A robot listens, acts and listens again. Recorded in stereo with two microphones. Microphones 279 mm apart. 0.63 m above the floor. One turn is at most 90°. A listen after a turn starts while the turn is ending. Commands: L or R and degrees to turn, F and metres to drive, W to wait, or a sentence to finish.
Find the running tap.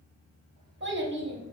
W
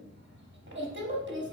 W
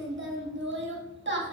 I can't make out a running tap to turn to.